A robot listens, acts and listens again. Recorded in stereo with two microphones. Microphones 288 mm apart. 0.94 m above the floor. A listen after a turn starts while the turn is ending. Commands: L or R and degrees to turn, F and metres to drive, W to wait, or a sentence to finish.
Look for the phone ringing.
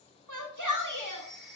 L30
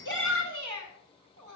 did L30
W
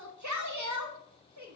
W
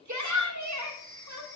R30
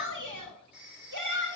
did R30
Found it: a phone ringing, straight ahead.